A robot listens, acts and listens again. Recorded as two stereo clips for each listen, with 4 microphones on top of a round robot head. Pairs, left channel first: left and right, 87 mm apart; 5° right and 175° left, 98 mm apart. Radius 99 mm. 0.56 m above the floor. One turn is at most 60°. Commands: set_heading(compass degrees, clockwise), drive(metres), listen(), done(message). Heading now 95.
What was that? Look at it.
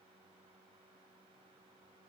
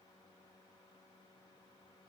listen()
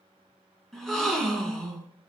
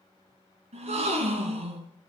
set_heading(35)
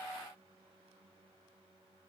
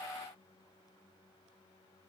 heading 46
set_heading(346)
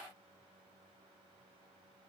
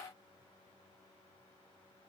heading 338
set_heading(278)
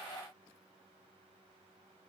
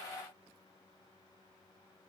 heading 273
done("I heard a gasp from this way, but can't make it out now.")